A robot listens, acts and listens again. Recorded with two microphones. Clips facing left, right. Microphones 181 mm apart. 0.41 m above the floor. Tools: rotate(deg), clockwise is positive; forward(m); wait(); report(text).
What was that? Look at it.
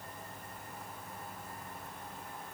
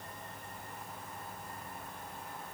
wait()
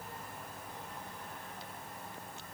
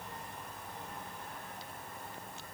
wait()
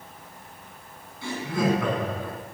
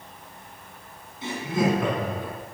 rotate(20)
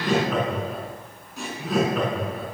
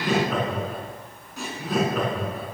rotate(-30)
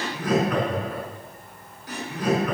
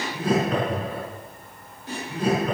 rotate(25)
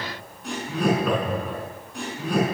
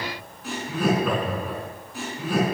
report("Facing the laughter.")